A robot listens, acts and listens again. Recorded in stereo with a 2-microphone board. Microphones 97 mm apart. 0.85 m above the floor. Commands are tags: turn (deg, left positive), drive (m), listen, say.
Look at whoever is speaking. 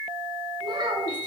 <turn deg="-50"/>
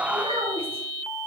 <turn deg="-80"/>
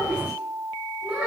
<turn deg="-10"/>
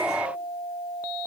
<listen/>
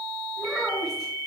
<say>Found it: a child speaking, straight ahead.</say>